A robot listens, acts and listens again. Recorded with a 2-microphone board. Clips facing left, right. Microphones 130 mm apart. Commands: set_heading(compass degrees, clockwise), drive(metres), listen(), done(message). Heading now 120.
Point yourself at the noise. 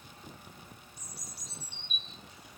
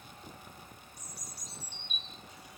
set_heading(90)
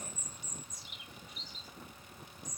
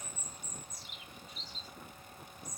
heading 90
set_heading(120)
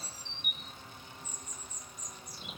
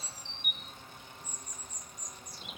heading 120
done("Found it: a bird, straight ahead, 1 to 2 m away.")